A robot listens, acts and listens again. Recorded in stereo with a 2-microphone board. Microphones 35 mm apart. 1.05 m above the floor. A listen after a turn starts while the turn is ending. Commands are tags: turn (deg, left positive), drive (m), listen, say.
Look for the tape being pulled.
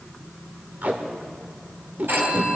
<turn deg="-50"/>
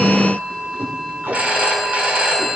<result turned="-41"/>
<turn deg="-90"/>
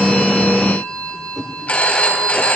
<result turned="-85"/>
<say>Found it: tape being pulled, straight ahead.</say>